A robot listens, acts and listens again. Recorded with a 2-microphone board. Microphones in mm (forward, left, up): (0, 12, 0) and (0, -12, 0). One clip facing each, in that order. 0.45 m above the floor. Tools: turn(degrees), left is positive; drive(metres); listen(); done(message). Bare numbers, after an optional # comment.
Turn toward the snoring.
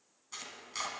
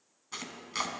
listen()
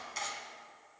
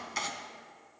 listen()
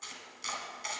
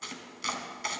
done("I can't make out snoring to turn to.")